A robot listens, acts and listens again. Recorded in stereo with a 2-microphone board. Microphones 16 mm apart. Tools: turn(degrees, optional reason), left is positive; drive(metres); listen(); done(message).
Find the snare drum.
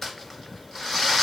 listen()
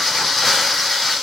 listen()
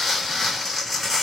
done("I can't make out a snare drum, only crumpling.")